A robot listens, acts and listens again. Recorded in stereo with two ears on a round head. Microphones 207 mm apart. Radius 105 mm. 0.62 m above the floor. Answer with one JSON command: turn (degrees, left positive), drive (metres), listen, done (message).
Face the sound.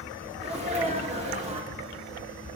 {"turn": -25}
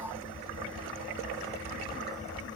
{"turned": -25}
{"listen": true}
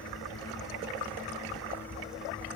{"done": "I heard a sneeze, but can't make it out now. It was about straight ahead or 130° right."}